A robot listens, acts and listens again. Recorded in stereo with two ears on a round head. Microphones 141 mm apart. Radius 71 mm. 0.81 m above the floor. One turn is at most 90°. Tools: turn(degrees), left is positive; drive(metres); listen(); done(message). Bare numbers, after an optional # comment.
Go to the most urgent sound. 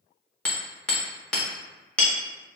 listen()
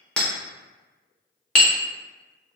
listen()
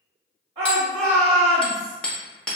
# The shout: about 30° right or 150° right.
turn(-30)
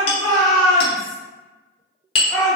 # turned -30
drive(1.0)
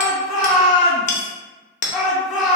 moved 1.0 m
drive(1.0)
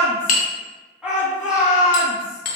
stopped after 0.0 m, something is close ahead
done("I am next to the shout.")